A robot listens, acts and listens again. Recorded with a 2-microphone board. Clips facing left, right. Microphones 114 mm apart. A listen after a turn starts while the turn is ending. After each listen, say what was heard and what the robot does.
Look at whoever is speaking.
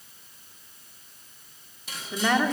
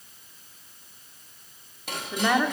Turn 30° right.
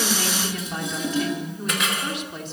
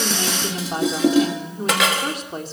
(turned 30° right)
So it is at 145° right. Turn 145° right.
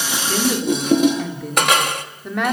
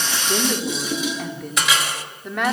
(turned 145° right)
Found it: a woman speaking, straight ahead.